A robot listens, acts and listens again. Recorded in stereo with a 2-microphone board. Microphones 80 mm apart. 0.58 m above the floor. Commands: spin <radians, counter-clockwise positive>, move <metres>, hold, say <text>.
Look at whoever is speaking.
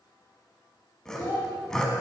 spin 0.87
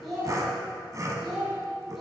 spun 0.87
say Found it: a child speaking, straight ahead, 2 to 4 m away.